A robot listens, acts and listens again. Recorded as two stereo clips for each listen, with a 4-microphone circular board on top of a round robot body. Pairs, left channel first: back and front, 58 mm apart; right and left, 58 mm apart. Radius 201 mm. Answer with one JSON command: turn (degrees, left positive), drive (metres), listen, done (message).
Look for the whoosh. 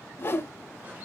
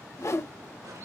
{"turn": -130}
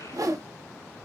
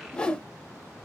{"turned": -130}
{"turn": -15}
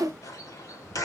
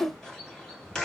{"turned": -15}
{"done": "Found it: a whoosh, straight ahead."}